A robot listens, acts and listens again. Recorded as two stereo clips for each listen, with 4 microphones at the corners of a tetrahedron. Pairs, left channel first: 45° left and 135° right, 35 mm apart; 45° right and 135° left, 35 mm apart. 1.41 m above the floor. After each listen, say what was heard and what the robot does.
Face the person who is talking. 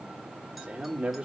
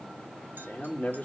The man speaking: 80° right. Turn 80° right.
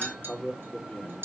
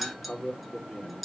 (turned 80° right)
Found it: a man speaking, straight ahead, 2 to 4 m away.